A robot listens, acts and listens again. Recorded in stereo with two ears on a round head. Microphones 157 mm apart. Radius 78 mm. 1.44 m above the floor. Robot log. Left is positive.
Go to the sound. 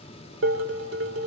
cmd yaw -90
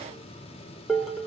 cmd fwd 1.0
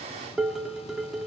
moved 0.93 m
cmd fwd 1.0
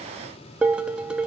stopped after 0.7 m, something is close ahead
note: The dishes clattering is now 10° right.
cmd yaw -10
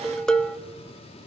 end: Arrived at the dishes clattering, straight ahead.